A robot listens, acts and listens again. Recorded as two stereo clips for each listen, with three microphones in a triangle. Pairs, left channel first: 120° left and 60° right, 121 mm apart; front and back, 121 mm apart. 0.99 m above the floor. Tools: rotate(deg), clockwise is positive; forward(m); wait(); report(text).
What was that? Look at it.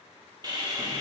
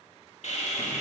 report("Found it: sawing, straight ahead.")